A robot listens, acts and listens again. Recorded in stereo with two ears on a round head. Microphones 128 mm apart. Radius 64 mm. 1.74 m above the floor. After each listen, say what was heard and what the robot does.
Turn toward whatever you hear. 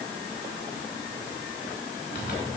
The zipper: about 65° left or 115° left. Turn 65° left.
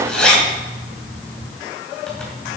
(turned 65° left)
So it is at 10° left. Turn 10° left.
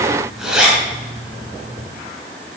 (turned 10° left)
Found it: a zipper, straight ahead.